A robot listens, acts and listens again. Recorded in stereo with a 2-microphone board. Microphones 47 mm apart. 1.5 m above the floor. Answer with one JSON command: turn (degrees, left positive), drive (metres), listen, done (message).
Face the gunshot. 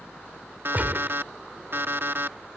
{"turn": -40}
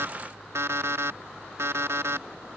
{"listen": true}
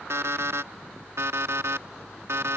{"done": "I heard a gunshot, but can't make it out now. It was about straight ahead or 100° right."}